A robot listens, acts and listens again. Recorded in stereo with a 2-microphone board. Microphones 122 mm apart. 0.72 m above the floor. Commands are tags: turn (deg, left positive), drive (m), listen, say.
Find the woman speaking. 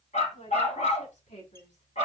<turn deg="90"/>
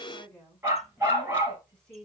<say>Facing the woman speaking.</say>